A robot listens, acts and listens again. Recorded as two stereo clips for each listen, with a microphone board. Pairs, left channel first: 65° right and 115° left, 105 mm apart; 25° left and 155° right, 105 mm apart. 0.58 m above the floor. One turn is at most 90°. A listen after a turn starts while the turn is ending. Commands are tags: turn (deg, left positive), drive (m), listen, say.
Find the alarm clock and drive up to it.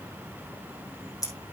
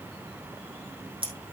<listen/>
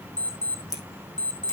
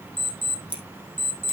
<turn deg="90"/>
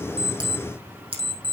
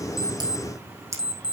<turn deg="70"/>
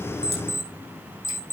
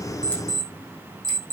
<drive m="1.0"/>
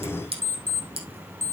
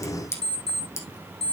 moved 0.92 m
<drive m="1.0"/>
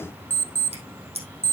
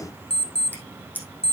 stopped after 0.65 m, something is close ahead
<say>I am next to the alarm clock.</say>